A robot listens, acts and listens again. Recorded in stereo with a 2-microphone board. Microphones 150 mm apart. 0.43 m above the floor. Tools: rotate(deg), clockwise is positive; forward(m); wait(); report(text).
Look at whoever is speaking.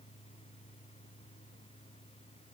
wait()
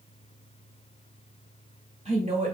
rotate(45)
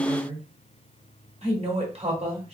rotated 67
rotate(55)
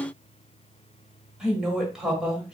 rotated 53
report("Facing the woman speaking.")